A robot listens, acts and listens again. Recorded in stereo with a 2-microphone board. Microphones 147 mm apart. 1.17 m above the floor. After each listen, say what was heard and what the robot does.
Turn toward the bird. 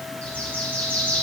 Turn 30° left.
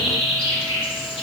So it is at 140° left. Turn 140° left.
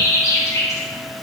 The bird is now 20° left. Turn 20° left.
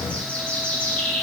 The bird is now 10° left. Turn 10° left.
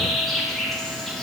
Facing the bird, 1 to 2 m away.